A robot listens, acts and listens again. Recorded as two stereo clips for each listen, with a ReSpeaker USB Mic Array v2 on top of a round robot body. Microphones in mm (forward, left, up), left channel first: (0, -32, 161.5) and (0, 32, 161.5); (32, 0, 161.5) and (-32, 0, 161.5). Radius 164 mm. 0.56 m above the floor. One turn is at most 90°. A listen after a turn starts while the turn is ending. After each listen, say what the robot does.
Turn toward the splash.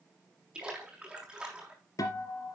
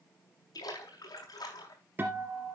Turn 15° left.
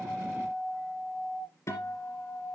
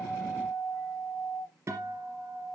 I heard a splash from this way, but can't make it out now.